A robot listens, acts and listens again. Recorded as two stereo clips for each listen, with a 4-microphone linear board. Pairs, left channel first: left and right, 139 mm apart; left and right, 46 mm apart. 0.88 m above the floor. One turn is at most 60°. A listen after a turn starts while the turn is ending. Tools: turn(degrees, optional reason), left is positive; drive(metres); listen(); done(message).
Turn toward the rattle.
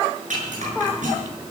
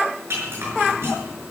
turn(degrees=-60, reason="The rattle: about 60° right or 120° right.")
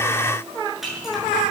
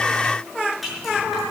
done("Facing the rattle, over 4 m away.")